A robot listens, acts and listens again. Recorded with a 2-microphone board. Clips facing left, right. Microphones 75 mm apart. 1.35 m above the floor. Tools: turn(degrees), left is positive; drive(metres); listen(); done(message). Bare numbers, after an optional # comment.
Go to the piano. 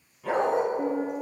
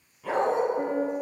# The piano: about 65° right or 115° right.
turn(-65)
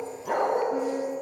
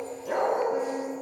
# So it is at 15° right.
turn(-15)
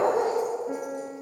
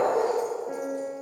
drive(1.0)
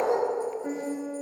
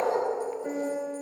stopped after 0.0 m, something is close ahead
done("Something is in my way. I am facing the piano but have not reached it.")